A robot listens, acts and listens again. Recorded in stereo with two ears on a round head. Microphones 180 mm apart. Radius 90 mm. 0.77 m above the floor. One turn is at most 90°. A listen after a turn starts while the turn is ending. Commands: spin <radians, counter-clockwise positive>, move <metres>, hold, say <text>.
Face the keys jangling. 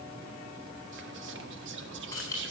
spin 0.26
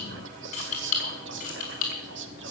spin 0.70
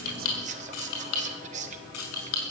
spin 1.57
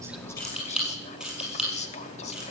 say Facing the keys jangling.